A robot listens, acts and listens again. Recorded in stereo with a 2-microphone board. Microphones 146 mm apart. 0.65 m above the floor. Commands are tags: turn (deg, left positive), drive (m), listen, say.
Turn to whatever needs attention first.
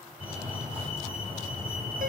<turn deg="-30"/>
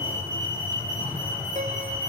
<turn deg="20"/>
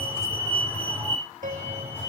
<turn deg="10"/>
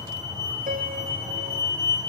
<say>Found it: a fire alarm, straight ahead, over 4 m away.</say>